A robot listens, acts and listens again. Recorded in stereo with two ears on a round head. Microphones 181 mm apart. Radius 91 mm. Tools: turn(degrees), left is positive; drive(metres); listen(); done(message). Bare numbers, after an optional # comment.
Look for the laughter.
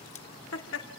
# The laughter: about 75° left or 105° left.
turn(75)
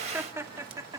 # So it is at 20° right.
turn(-20)
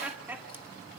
# The laughter is now 10° right.
turn(-10)
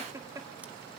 # The laughter is now 20° right.
turn(-20)
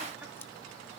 listen()
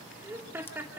# The laughter is now 10° right.
turn(-10)
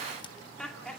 done("Facing the laughter.")